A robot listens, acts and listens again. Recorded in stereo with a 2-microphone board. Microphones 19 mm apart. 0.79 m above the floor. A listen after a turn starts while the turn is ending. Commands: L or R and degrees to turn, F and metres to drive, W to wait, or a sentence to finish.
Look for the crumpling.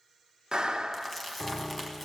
L30
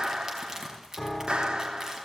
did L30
R25
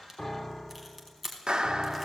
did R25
Facing the crumpling.